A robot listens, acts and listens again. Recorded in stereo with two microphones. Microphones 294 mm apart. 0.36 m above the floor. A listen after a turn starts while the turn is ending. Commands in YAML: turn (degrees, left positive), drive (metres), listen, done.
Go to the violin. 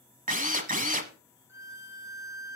turn: -70
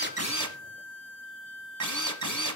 turn: -40
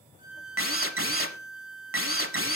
drive: 1.0
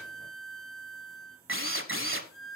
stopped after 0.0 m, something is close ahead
done: "Something is in my way. I am facing the violin but have not reached it."